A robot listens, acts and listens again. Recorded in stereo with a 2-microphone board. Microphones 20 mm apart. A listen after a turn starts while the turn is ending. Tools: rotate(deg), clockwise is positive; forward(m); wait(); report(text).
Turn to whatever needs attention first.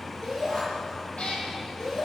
rotate(-25)
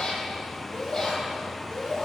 rotate(-130)
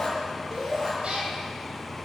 rotate(30)
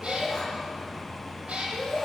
report("Facing the shout, over 4 m away.")